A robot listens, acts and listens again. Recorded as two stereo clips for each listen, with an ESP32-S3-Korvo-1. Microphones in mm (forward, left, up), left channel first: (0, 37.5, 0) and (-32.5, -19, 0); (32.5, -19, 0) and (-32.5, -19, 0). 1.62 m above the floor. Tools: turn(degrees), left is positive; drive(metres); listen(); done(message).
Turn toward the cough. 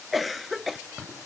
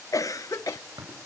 turn(degrees=-30)
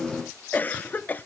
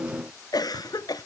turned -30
done("Found it: a cough, straight ahead, under 1 m away.")